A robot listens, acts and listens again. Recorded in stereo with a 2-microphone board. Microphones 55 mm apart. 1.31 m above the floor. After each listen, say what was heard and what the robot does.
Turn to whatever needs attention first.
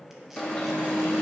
The alarm: about 20° left or 160° left. Turn 20° left.
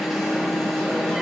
Found it: an alarm, straight ahead, 1 to 2 m away.